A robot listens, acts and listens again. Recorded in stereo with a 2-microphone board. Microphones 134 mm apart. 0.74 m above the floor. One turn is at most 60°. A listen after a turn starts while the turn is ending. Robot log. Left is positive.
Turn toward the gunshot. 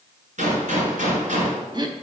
note: The gunshot: about 70° right or 110° right.
cmd yaw -60
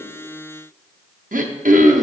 cmd idle
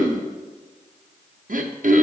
end: I heard a gunshot, but can't make it out now. It was about 10° right or 50° right.